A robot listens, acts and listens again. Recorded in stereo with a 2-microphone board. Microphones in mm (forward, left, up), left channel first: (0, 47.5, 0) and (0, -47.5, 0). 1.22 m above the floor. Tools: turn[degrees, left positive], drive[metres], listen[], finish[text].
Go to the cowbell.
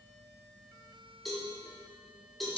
Action: turn[30]
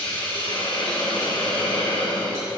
Action: listen[]
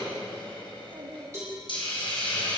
Thought: So it is at 30° right.
Action: turn[-30]
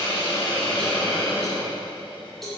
Action: drive[1.0]
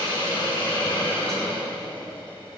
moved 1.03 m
Action: listen[]
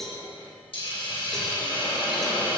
Action: drive[1.0]
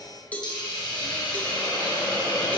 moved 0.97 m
Thought: The cowbell is now 15° left.
Action: turn[15]
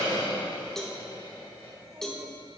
Action: drive[1.0]
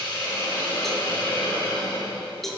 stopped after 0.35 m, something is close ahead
Action: finish[I am next to the cowbell.]